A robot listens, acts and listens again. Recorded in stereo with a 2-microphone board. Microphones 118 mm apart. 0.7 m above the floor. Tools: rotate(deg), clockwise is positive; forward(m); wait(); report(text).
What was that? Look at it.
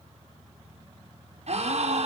rotate(60)
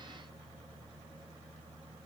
wait()
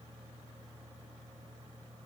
report("I heard a gasp, but can't make it out now. It was about straight ahead or 60° right.")